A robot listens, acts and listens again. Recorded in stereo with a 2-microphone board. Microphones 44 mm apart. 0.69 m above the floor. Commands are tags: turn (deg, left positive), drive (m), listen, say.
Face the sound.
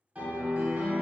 <turn deg="-35"/>
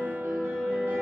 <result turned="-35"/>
<turn deg="-110"/>
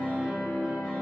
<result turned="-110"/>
<turn deg="-20"/>
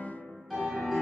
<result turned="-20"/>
<say>Found it: a piano, straight ahead.</say>